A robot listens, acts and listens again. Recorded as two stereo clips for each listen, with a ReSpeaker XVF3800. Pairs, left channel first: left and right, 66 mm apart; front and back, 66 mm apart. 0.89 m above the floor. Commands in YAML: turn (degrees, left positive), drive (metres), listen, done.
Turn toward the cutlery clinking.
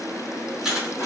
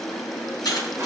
done: "Found it: cutlery clinking, straight ahead."